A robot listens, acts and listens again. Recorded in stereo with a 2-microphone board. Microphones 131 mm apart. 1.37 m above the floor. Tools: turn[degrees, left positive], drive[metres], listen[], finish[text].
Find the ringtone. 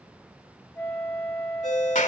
Thought: The ringtone: about 70° left or 110° left.
Action: turn[70]
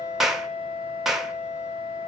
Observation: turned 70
Action: listen[]
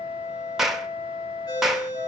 Thought: So it is at 35° left.
Action: turn[35]
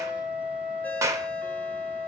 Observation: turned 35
Action: listen[]
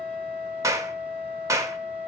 Action: listen[]
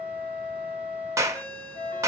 Thought: The ringtone is now 15° left.
Action: turn[15]
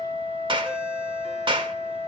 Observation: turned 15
Action: listen[]
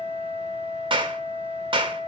Action: listen[]
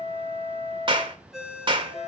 Action: finish[Facing the ringtone, 2 to 4 m away.]